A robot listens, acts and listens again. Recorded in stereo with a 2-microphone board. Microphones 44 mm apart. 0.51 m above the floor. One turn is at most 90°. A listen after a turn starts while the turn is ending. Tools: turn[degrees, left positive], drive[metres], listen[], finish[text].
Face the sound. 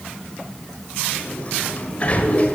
Thought: The sliding door: about 35° left or 145° left.
Action: turn[35]
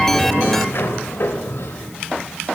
Thought: So it is at 105° left.
Action: turn[90]
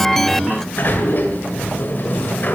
Thought: The sliding door is now 50° left.
Action: turn[50]
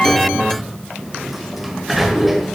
Action: finish[Found it: a sliding door, straight ahead.]